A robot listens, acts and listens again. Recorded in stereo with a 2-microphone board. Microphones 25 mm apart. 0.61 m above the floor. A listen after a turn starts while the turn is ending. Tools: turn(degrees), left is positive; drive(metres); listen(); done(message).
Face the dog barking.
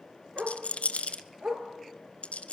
turn(degrees=-90)
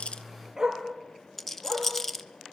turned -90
turn(degrees=-20)
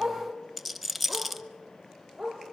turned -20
turn(degrees=-10)
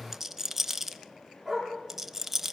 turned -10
done("Found it: a dog barking, straight ahead.")